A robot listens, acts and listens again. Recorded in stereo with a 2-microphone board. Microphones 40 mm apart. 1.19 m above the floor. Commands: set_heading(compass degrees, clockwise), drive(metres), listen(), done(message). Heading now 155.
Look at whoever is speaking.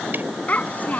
set_heading(115)
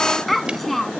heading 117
done("Facing the child speaking.")